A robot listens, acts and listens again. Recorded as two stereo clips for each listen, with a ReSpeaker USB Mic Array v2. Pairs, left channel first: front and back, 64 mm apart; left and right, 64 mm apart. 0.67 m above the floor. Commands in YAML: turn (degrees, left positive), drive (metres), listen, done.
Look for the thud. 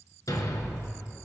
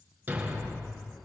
turn: -25
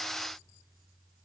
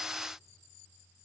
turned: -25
done: "I heard a thud from this way, but can't make it out now."